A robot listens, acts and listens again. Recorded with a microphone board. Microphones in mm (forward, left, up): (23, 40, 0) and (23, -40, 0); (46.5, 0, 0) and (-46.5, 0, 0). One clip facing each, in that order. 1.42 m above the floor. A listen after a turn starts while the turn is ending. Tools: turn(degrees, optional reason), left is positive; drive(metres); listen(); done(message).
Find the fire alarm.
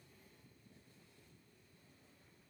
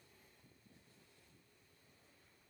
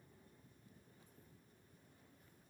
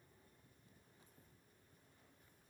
listen()
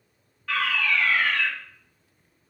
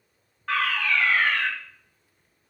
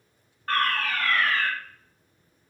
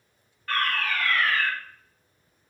turn(degrees=-50, reason="The fire alarm: 50° right.")
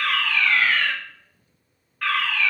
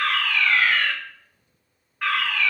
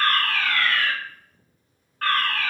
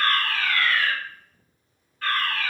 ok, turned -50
turn(degrees=-15, reason="The fire alarm is now 15° right.")
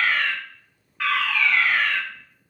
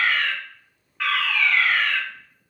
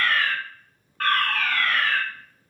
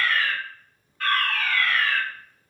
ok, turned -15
done("Facing the fire alarm, 2 to 4 m away.")